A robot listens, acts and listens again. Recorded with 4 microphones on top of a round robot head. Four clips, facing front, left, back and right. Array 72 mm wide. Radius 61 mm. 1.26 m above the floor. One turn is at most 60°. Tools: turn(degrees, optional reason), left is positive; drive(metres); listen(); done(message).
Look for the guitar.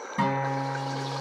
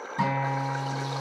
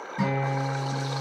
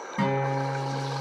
turn(degrees=-35, reason="The guitar: 35° right.")
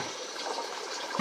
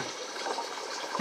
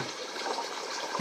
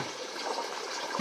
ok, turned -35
done("Found it: a guitar, straight ahead, 1 to 2 m away.")